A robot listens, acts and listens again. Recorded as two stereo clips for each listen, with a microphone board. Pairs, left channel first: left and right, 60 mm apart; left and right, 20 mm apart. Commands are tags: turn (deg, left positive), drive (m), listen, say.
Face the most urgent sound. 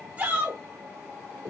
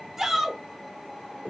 <turn deg="-25"/>
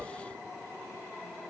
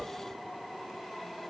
<listen/>
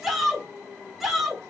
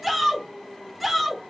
<say>Found it: a shout, straight ahead.</say>